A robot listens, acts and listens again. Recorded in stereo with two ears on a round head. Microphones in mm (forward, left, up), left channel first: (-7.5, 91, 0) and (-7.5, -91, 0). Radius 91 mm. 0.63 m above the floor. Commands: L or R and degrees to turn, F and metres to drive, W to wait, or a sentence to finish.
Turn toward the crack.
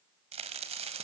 R30
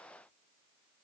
W
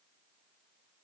I heard a crack, but can't make it out now. It was about straight ahead or 120° right.